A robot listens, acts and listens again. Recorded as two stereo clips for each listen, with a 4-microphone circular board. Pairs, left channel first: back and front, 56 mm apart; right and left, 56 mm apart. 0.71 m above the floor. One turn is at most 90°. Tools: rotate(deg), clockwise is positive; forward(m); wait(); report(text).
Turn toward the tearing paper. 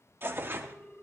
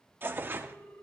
rotate(-45)
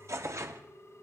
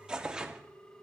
rotate(-15)
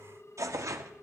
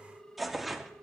report("Facing the tearing paper, under 1 m away.")